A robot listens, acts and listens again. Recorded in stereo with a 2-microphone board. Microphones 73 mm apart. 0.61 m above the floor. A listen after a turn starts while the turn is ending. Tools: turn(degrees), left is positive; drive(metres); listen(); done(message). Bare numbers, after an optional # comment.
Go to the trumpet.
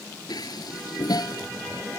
listen()
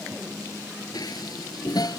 listen()
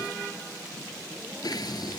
done("I can't make out a trumpet to turn to.")